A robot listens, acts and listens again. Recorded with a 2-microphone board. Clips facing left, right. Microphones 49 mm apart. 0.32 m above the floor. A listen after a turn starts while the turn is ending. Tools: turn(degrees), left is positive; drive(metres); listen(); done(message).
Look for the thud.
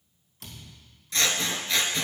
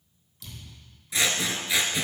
turn(degrees=45)
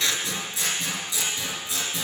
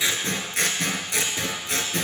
listen()
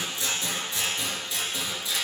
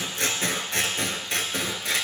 done("I heard a thud, but can't make it out now. It was about straight ahead or 90° left.")